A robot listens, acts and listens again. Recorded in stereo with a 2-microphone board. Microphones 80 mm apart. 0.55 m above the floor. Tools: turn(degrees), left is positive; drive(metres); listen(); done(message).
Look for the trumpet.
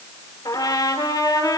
turn(degrees=50)
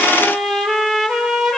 done("Found it: a trumpet, straight ahead, over 4 m away.")